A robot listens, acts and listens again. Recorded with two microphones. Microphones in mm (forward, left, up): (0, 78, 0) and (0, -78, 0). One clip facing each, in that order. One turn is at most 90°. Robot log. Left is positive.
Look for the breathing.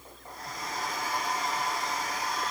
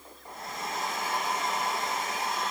cmd idle
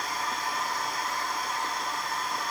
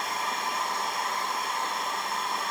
cmd idle
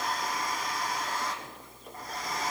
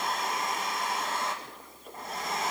end: I can't make out breathing, only a hair dryer.